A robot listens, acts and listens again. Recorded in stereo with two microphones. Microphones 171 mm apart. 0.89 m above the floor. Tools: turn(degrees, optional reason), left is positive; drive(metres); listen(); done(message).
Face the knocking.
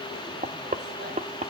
turn(degrees=-50, reason="The knocking: about 50° right or 130° right.")
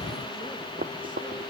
turn(degrees=-80, reason="So it is at 80° right.")
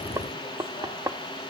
turn(degrees=-20, reason="The knocking is now 20° right.")
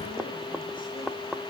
done("Found it: knocking, straight ahead.")